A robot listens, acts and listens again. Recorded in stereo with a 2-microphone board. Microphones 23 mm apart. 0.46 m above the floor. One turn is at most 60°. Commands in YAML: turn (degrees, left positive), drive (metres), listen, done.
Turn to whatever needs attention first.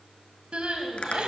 turn: -50
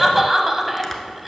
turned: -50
done: "Found it: crying, straight ahead, 1 to 2 m away."